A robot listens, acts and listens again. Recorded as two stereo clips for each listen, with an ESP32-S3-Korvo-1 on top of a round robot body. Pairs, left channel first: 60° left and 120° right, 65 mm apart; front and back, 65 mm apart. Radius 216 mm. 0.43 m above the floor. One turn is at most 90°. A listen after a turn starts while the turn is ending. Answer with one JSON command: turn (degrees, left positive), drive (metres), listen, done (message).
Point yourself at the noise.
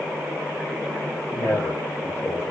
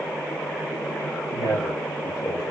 {"turn": 20}
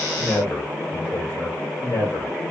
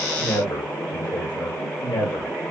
{"turn": 15}
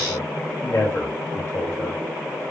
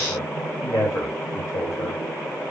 {"turn": 10}
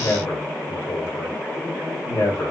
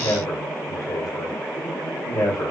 {"turn": 10}
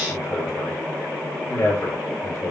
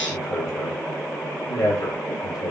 {"done": "Facing the man speaking, 2 to 4 m away."}